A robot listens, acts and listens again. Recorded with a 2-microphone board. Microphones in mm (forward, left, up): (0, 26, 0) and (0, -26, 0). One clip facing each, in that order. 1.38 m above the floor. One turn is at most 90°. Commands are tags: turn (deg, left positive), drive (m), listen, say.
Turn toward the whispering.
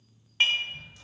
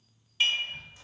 <turn deg="-65"/>
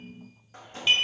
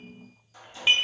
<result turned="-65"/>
<listen/>
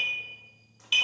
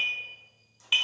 <listen/>
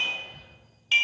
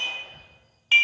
<turn deg="-45"/>
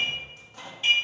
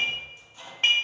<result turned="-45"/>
<listen/>
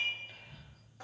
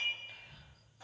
<say>Facing the whispering.</say>